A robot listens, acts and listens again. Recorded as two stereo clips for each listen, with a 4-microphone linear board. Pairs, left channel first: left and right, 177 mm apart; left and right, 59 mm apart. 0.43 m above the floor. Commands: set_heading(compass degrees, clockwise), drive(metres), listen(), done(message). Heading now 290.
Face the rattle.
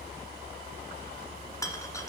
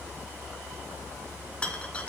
set_heading(270)
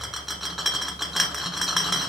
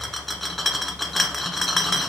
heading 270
done("Facing the rattle.")